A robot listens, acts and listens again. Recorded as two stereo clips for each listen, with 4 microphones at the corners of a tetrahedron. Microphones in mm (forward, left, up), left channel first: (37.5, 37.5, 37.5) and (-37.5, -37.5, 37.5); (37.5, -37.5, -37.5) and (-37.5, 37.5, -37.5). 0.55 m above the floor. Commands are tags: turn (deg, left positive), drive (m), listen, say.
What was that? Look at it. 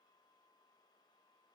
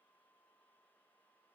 <listen/>
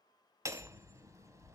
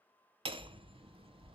<turn deg="165"/>
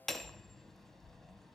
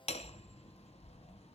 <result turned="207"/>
<turn deg="-40"/>
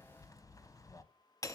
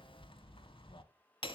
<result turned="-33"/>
<turn deg="-10"/>
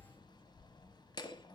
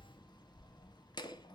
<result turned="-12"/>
<say>Found it: hammering, straight ahead, under 1 m away.</say>